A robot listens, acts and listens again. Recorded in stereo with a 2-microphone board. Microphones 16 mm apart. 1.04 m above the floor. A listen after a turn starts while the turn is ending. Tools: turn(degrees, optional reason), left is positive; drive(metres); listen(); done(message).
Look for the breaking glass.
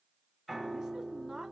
listen()
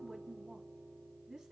listen()
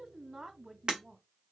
turn(degrees=-65, reason="The breaking glass: about 65° right or 115° right.")
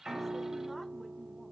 listen()
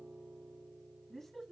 done("I heard breaking glass, but can't make it out now. It was about straight ahead or 50° right.")